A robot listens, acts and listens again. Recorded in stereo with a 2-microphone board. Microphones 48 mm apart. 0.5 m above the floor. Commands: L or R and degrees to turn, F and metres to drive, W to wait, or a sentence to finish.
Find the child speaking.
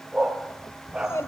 L70
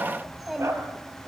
Facing the child speaking, 2 to 4 m away.